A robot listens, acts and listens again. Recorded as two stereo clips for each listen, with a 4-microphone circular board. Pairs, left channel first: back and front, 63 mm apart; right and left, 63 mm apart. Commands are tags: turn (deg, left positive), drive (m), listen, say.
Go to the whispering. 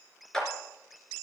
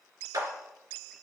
<listen/>
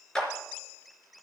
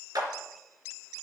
<listen/>
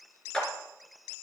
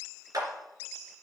<say>I can't make out whispering to turn to.</say>